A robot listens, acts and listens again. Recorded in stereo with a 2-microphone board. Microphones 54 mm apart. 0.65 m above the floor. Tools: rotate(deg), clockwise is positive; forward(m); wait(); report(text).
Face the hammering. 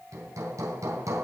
rotate(90)
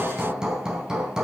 rotate(15)
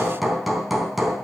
report("Found it: hammering, straight ahead.")